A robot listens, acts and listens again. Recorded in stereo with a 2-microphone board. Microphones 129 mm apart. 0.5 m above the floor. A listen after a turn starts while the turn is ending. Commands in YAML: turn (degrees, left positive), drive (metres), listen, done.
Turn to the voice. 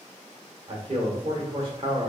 turn: -45
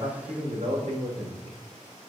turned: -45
turn: -75
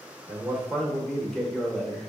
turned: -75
done: "Facing the man speaking."